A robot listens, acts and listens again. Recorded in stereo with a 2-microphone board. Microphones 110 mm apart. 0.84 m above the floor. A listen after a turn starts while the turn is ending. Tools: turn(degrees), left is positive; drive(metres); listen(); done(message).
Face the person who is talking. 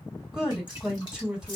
turn(degrees=-30)
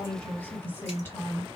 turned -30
turn(degrees=25)
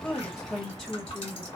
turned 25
done("Facing the woman speaking.")